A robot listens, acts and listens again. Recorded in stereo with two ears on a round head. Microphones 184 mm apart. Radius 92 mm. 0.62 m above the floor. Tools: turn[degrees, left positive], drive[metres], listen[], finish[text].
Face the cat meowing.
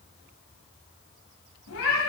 Action: turn[90]
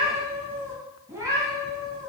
Thought: So it is at 20° right.
Action: turn[-20]
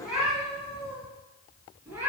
Thought: The cat meowing is now 10° right.
Action: turn[-10]
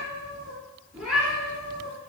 Action: finish[Found it: a cat meowing, straight ahead, 2 to 4 m away.]